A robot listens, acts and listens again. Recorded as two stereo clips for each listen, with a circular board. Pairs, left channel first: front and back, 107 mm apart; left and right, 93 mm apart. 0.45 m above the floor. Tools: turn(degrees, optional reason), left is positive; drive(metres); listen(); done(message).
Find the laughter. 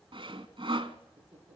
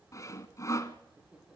turn(degrees=-170, reason="The laughter: 170° right.")
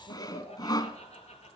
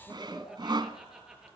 turn(degrees=-10, reason="The laughter is now 10° right.")
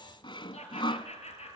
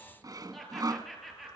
done("Found it: laughter, straight ahead, over 4 m away.")